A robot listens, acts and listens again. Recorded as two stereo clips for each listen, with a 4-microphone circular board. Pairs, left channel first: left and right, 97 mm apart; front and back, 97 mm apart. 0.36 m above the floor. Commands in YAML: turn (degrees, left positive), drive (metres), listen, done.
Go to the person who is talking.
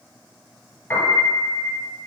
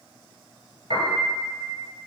listen: true
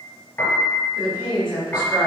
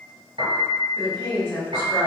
turn: 55
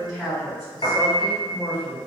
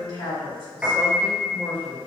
drive: 1.0
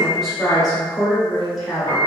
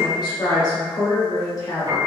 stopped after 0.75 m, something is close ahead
done: "Arrived at the woman speaking, straight ahead."